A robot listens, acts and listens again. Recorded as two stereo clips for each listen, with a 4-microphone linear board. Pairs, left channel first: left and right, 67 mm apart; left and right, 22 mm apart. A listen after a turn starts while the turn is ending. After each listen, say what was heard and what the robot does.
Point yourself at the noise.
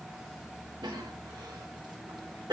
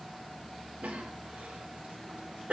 Turn 90° right.
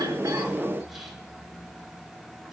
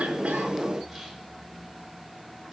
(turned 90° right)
Keep listening.
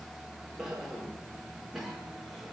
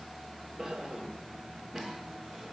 Found it: a cough, straight ahead.